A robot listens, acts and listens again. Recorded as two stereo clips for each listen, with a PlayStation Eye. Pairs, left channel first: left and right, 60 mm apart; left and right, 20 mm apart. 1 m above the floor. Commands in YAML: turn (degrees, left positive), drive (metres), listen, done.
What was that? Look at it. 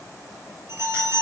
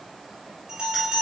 turn: -45
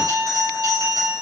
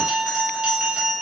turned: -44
turn: -90
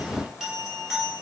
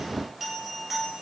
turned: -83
done: "Found it: a bell, straight ahead."